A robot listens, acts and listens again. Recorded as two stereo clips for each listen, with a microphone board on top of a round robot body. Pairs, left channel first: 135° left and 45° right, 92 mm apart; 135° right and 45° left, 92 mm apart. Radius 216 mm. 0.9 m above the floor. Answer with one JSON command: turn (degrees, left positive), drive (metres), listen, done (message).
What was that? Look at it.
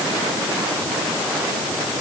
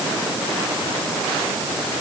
{"listen": true}
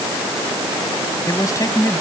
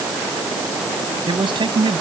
{"turn": 80}
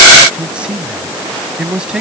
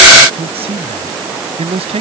{"turn": 35}
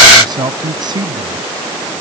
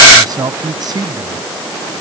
{"done": "Found it: a man speaking, straight ahead."}